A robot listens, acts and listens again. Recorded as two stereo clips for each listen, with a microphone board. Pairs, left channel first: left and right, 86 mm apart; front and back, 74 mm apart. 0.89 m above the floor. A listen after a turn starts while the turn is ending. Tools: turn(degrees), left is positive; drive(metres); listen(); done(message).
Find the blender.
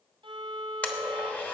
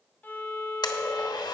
turn(degrees=15)
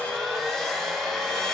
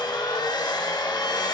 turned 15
done("Facing the blender, 1 to 2 m away.")